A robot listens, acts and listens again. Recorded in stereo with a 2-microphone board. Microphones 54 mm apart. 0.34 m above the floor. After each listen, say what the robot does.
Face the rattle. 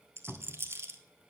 Turn 50° right.
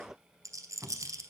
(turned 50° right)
Turn 80° right.
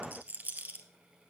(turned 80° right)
Turn 30° right.
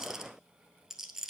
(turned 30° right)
Turn 10° right.
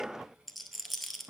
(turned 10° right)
Facing the rattle, 1 to 2 m away.